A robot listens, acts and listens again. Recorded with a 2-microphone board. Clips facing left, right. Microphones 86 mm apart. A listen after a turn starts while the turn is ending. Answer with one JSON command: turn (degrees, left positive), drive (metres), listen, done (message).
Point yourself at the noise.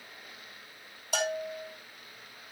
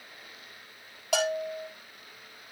{"turn": -70}
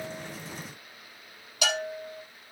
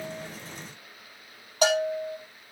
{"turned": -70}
{"turn": -35}
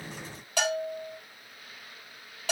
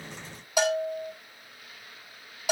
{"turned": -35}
{"turn": -10}
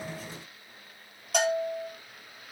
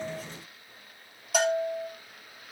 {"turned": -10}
{"done": "Found it: a bell, straight ahead, over 4 m away."}